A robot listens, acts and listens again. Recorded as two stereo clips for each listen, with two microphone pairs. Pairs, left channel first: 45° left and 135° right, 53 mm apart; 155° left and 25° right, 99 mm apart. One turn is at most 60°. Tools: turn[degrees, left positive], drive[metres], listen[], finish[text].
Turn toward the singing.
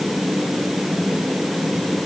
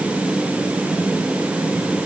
Action: listen[]
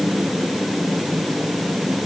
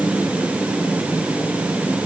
Action: listen[]
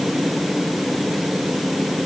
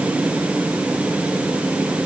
Action: finish[I can't make out singing.]